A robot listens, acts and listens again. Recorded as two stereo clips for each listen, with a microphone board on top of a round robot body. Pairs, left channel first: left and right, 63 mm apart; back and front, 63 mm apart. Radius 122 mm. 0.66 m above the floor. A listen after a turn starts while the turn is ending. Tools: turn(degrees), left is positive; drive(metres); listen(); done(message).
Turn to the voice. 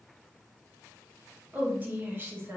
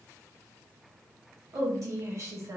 turn(degrees=-40)
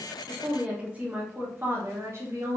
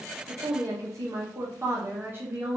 turn(degrees=-60)
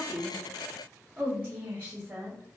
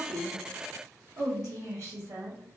turn(degrees=-30)
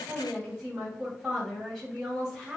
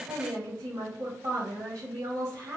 done("Facing the woman speaking.")